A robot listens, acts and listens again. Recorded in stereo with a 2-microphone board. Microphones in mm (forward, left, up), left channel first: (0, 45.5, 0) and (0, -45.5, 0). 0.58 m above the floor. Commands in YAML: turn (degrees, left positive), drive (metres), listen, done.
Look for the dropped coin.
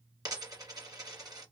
turn: -40
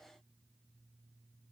listen: true
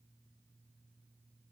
done: "I heard a dropped coin, but can't make it out now. It was about straight ahead or 100° right."